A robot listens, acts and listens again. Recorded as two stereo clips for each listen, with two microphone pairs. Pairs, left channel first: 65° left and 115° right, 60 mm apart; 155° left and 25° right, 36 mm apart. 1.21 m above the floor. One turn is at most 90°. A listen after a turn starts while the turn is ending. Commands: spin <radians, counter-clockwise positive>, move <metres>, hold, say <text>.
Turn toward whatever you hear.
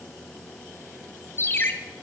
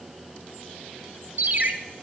spin 0.26
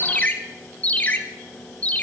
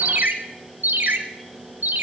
say Facing the ringtone.